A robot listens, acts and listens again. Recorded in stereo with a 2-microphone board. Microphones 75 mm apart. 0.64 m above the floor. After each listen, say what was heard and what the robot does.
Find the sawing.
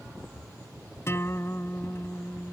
Keep listening.
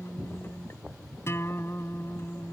Keep listening.
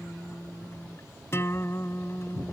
I can't make out sawing to turn to.